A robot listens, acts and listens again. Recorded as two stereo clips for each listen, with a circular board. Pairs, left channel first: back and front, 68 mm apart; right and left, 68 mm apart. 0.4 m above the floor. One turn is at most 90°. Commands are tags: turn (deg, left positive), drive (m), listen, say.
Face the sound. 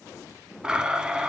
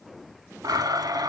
<turn deg="75"/>
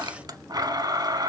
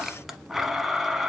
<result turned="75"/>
<say>Found it: a blender, straight ahead.</say>